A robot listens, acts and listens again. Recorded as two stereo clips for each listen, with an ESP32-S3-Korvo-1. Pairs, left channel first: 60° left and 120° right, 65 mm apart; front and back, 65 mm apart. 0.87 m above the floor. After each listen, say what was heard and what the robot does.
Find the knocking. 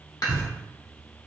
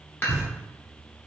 The knocking: 110° right. Turn 110° right.
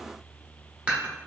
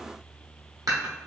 Keep listening.
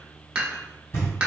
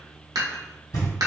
The knocking is now 10° left. Turn 10° left.
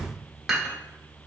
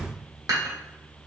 Keep listening.
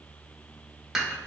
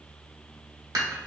Found it: knocking, straight ahead, 1 to 2 m away.